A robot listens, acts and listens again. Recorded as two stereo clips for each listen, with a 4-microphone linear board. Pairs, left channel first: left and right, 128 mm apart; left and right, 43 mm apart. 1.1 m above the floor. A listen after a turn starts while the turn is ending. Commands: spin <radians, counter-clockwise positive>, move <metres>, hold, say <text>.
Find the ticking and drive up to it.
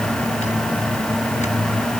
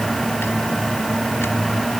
hold
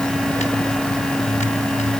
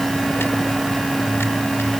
hold
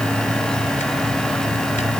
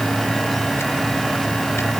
say I can't make out ticking.